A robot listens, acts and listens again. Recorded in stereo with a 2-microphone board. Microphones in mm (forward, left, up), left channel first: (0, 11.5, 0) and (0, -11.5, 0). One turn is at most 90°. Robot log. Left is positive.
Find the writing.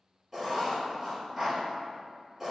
cmd yaw -30
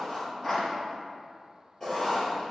note: So it is at 20° left.
cmd yaw +20
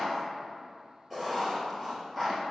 end: Found it: writing, straight ahead.